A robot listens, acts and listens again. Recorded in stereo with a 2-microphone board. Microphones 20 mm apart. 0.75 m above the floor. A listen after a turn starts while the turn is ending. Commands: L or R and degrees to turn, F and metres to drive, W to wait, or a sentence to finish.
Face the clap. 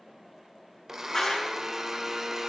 L25
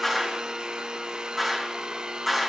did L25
Found it: a clap, straight ahead, over 4 m away.